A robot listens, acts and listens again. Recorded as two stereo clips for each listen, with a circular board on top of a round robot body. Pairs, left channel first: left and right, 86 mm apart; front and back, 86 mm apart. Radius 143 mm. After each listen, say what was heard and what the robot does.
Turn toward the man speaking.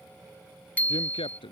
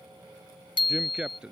The man speaking: 100° left. Turn 100° left.
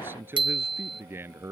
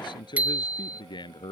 The man speaking is now 25° right. Turn 25° right.
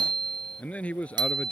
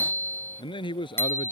The man speaking is now 15° left. Turn 15° left.
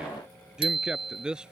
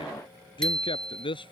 The man speaking is now 10° right. Turn 10° right.
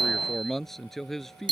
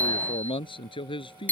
Found it: a man speaking, straight ahead.